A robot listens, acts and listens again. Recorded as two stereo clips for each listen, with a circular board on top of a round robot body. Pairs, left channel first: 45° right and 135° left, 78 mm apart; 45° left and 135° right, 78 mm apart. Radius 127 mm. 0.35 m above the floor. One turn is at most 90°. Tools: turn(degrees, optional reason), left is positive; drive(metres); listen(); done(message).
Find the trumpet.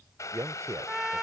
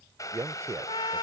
turn(degrees=50, reason="The trumpet: 50° left.")
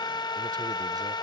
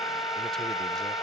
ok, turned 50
done("Found it: a trumpet, straight ahead.")